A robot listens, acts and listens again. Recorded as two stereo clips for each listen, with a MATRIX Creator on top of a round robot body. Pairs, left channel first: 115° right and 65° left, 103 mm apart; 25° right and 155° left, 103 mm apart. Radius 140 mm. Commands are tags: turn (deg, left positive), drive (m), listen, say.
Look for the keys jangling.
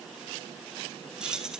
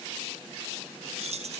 <turn deg="150"/>
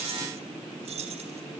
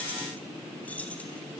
<turn deg="55"/>
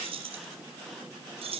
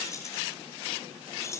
<turn deg="40"/>
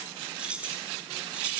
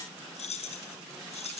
<turn deg="-10"/>
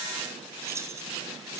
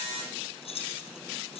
<say>Facing the keys jangling, over 4 m away.</say>